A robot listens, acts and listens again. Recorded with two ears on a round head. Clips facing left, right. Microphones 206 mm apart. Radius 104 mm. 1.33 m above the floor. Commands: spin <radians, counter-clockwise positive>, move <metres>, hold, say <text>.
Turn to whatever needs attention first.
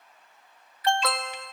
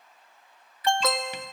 spin -1.57
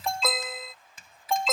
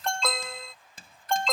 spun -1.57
say Found it: an alarm, straight ahead.